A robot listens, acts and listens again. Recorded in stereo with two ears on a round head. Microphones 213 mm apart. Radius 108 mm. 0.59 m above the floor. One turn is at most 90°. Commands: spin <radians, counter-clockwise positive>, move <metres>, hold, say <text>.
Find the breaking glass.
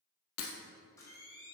spin 1.22
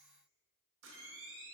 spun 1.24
hold
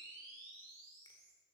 say I heard breaking glass, but can't make it out now. It was about straight ahead or 40° left.